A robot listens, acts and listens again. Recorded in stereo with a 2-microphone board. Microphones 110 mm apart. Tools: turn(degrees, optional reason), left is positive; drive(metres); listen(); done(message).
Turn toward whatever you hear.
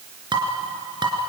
turn(degrees=-45, reason="The dishes clattering: about 45° right or 135° right.")
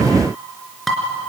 done("Found it: dishes clattering, straight ahead.")